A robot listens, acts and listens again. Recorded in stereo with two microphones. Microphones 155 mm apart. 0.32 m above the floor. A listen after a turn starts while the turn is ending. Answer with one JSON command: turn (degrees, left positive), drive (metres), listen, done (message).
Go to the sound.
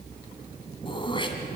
{"turn": 30}
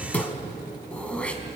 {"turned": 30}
{"turn": 10}
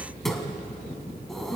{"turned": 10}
{"drive": 1.0}
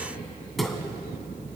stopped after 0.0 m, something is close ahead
{"done": "Blocked. The throat clearing is further on, straight ahead."}